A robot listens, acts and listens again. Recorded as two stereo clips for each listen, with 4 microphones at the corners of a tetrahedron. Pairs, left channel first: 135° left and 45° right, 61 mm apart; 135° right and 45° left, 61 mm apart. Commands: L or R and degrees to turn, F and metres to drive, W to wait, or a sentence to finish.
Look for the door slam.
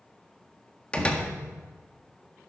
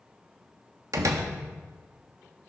L65
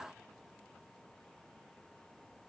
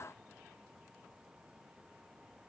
I heard a door slam from this way, but can't make it out now.